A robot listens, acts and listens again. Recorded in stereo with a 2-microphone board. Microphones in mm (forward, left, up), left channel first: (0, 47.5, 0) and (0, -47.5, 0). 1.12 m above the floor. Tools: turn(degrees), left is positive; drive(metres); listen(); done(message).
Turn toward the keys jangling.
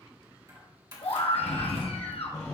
turn(degrees=-45)
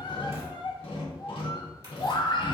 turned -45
listen()
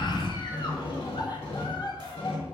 listen()
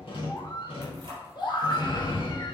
turn(degrees=-55)
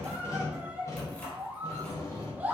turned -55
turn(degrees=15)
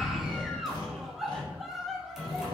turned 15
listen()
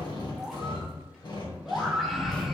listen()
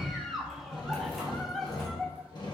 done("I heard keys jangling from this way, but can't make it out now.")